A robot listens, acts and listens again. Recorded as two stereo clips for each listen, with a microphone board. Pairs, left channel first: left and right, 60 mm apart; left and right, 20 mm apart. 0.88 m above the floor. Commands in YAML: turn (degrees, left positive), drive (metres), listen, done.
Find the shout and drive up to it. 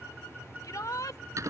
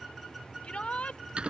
turn: 90
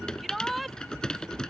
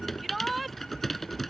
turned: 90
drive: 1.0
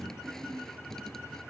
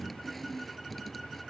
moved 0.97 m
listen: true
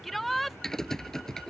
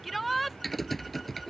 drive: 1.0
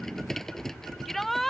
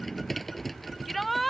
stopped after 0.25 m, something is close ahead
done: "I am next to the shout."